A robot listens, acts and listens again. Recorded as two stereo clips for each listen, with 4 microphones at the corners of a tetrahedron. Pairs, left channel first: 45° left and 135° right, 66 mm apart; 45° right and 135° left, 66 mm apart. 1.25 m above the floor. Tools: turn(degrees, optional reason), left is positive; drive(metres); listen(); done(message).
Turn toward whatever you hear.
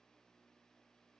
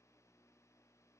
listen()
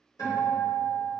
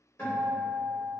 turn(degrees=10, reason="The guitar: 10° left.")
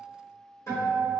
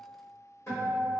done("Facing the guitar.")